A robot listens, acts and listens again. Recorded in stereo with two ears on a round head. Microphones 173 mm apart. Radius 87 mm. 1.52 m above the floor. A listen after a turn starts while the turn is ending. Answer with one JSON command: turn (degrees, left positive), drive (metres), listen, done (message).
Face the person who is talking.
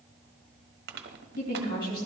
{"turn": 45}
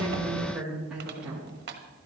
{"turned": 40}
{"done": "Facing the woman speaking, 2 to 4 m away."}